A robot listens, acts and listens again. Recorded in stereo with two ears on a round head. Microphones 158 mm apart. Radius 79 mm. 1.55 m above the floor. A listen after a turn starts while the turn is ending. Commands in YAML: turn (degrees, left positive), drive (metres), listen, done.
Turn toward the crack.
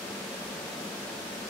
listen: true
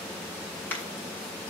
turn: 30
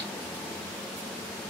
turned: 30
listen: true
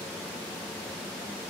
done: "I heard a crack, but can't make it out now. It was about 20° right or 140° left."